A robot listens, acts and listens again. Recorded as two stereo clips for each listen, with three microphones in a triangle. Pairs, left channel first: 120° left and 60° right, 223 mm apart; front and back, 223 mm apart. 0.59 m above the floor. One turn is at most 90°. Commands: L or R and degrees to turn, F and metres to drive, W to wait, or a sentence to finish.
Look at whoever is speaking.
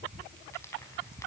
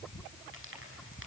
W
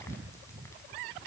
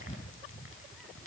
W
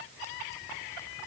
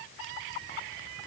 I can't make out anyone speaking.